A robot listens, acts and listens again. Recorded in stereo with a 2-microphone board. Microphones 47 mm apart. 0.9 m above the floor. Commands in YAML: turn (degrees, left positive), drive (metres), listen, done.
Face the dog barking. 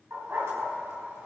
turn: -90
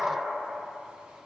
turn: -20
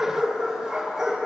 turn: -15
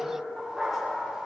turn: -10
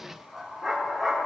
done: "Facing the dog barking."